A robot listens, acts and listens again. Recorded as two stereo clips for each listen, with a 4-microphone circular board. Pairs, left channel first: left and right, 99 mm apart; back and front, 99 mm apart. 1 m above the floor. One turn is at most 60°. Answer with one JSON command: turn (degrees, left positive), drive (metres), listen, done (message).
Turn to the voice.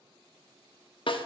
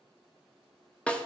{"listen": true}
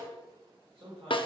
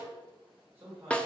{"turn": -60}
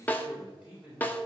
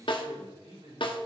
{"turn": -10}
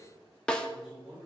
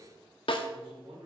{"done": "Facing the man speaking."}